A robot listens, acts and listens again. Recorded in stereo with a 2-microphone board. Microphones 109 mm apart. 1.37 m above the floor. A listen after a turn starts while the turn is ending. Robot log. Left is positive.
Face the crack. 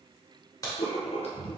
note: The crack: about 30° left or 150° left.
cmd yaw +30
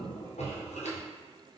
cmd idle
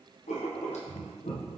end: I heard a crack, but can't make it out now. It was about straight ahead or 120° left.